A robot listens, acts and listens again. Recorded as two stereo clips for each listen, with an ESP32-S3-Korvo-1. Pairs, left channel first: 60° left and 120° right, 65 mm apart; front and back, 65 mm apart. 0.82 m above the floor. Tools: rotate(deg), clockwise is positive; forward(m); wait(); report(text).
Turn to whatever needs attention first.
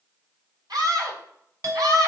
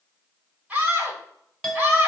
rotate(115)
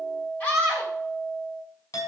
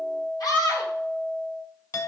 report("Facing the scream, 2 to 4 m away.")